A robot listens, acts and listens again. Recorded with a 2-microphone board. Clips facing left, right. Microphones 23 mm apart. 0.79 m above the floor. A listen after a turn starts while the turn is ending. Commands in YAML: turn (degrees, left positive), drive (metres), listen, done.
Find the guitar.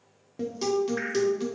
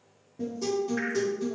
turn: 65
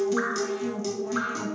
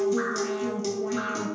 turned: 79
turn: -15
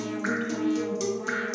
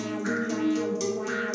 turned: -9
done: "Found it: a guitar, straight ahead, under 1 m away."